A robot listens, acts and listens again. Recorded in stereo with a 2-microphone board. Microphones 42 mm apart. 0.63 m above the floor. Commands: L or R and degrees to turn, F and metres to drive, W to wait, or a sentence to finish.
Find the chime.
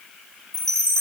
L30
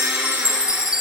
R15
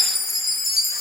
Found it: a chime, straight ahead.